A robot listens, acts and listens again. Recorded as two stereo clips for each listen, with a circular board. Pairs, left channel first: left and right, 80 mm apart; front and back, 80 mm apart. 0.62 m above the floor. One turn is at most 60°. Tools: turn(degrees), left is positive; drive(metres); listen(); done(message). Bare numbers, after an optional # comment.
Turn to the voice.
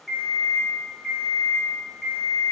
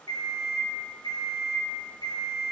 listen()
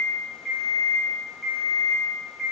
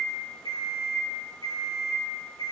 listen()
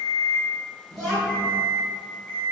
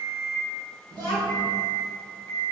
# The child speaking: 165° left.
turn(60)
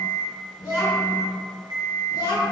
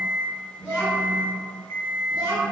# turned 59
# The child speaking is now 105° left.
turn(60)
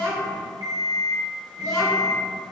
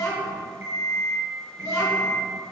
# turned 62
# The child speaking is now 45° left.
turn(45)
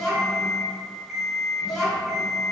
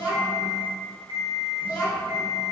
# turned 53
done("Found it: a child speaking, straight ahead, 1 to 2 m away.")